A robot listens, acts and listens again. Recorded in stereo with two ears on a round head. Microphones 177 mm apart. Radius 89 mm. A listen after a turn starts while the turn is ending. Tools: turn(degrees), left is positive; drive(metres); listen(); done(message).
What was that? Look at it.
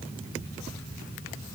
listen()
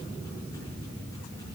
listen()
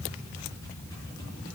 done("I can't make out anything.")